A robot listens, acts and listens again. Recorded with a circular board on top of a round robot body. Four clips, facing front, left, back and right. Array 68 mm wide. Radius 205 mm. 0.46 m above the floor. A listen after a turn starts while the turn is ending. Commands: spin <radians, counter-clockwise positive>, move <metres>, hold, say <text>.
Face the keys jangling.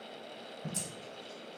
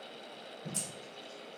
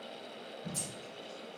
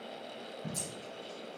spin 0.79
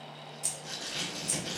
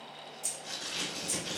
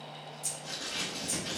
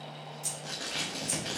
spin -0.52
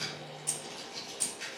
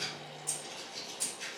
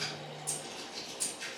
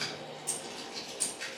spin -0.52
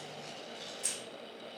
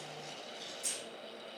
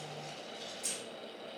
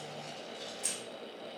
spin -0.52
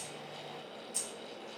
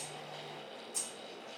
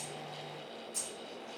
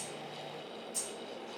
spin -0.26
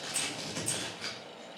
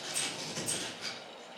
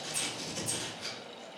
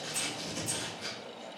say Facing the keys jangling.